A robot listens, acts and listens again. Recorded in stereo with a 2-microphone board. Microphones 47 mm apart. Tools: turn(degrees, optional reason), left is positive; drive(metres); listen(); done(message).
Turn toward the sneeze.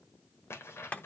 listen()
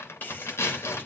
turn(degrees=40, reason="The sneeze: about 40° left or 140° left.")
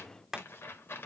listen()
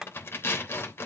done("I heard a sneeze, but can't make it out now. It was about straight ahead or 100° left.")